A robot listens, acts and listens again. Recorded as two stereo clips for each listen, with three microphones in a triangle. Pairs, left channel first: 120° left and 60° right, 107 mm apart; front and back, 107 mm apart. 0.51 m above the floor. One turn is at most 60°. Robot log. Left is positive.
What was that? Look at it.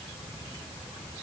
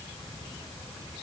cmd idle
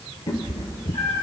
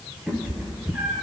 note: The cat meowing: 100° left.
cmd yaw +60
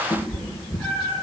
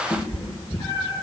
note: The cat meowing is now 45° left.
cmd yaw +45
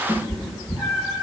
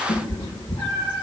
note: The cat meowing is now 10° left.
cmd yaw +10
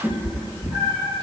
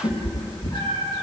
end: Found it: a cat meowing, straight ahead, over 4 m away.